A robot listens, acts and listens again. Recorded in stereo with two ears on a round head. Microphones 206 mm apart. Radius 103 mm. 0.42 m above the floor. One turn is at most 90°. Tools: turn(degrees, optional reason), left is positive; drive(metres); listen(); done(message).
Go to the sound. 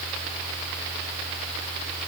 listen()
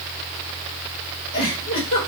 turn(degrees=60, reason="The giggle: about 60° left or 120° left.")
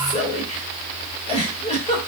turn(degrees=30, reason="So it is at 30° left.")
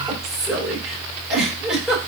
drive(metres=1.0)
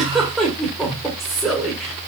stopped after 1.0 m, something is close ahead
done("I am next to the giggle.")